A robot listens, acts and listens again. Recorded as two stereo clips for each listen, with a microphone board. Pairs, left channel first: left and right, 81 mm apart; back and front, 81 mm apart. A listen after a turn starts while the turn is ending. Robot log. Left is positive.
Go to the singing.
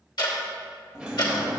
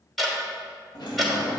cmd idle
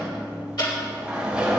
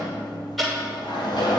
cmd idle
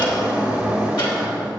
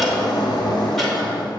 end: I can't make out singing to turn to.